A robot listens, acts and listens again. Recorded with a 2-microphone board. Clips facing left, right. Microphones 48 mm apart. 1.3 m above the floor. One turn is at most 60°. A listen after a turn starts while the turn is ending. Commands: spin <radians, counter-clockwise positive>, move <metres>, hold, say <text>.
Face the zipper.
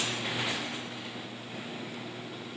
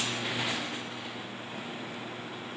hold
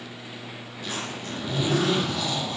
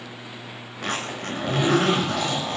spin -1.05
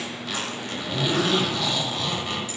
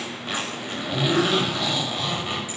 spin -0.26
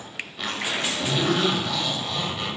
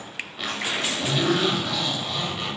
say Facing the zipper, over 4 m away.